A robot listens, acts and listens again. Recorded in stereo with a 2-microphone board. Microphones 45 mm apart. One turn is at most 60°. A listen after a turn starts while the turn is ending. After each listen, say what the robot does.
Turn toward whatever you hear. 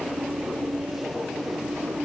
Keep listening.
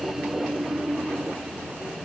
Keep listening.
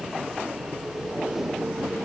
I can't make out anything.